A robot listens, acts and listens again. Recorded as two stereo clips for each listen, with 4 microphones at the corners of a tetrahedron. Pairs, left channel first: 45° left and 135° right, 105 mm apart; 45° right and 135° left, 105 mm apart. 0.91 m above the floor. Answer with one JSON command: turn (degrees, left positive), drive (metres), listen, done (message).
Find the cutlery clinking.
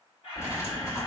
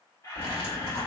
{"turn": -20}
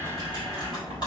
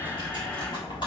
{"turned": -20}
{"done": "Found it: cutlery clinking, straight ahead."}